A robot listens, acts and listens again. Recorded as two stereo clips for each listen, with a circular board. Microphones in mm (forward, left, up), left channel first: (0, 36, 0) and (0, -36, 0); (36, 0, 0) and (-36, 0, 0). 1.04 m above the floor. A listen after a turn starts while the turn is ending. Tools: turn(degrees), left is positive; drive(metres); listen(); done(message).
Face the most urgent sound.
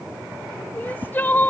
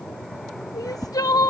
turn(degrees=25)
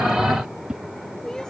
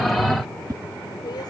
turn(degrees=10)
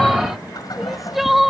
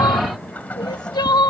done("Facing the crying.")